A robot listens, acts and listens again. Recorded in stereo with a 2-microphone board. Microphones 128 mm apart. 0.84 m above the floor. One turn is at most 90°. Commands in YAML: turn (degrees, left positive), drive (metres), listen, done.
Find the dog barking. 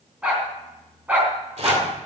turn: -30
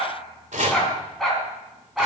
turn: 30
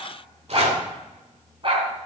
turn: -45
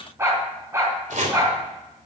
turn: -20
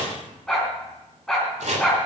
done: "Found it: a dog barking, straight ahead."